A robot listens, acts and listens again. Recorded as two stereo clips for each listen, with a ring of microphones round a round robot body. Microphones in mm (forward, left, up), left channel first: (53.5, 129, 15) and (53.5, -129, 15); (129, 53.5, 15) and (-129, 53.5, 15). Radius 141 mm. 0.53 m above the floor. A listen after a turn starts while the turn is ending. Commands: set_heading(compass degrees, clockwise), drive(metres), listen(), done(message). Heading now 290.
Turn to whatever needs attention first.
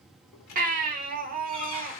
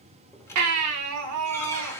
set_heading(80)
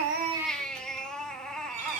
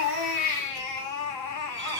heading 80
done("Found it: a baby crying, straight ahead, under 1 m away.")